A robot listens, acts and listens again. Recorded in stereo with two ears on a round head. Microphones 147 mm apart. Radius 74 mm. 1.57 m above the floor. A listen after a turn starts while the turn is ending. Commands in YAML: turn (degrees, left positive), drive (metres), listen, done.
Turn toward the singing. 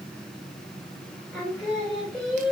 turn: 30
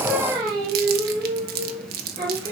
turn: -25
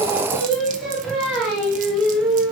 done: "Facing the singing, 2 to 4 m away."